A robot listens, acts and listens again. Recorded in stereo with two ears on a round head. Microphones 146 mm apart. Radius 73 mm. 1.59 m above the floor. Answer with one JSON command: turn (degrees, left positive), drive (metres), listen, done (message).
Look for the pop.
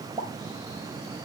{"turn": -25}
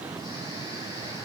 {"listen": true}
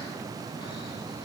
{"done": "I heard a pop, but can't make it out now. It was about straight ahead or 130° right."}